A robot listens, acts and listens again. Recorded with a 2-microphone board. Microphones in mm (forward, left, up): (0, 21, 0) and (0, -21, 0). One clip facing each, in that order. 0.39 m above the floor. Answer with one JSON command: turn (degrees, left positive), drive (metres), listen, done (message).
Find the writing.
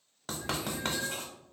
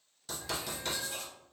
{"turn": 50}
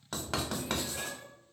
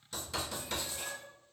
{"turn": 80}
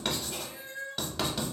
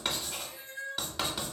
{"done": "Found it: writing, straight ahead."}